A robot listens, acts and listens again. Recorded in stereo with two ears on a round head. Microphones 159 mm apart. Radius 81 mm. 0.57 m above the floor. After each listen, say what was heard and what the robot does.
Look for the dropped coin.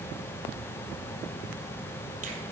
Keep listening.
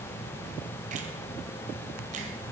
Keep listening.
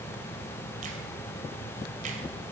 I can't make out a dropped coin to turn to.